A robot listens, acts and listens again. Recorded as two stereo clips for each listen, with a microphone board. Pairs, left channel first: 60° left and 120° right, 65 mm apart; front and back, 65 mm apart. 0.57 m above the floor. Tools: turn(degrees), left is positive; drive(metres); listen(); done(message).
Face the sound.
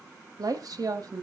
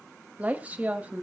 turn(degrees=-115)
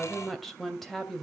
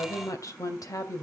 turn(degrees=-25)
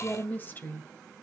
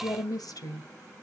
done("Facing the woman speaking.")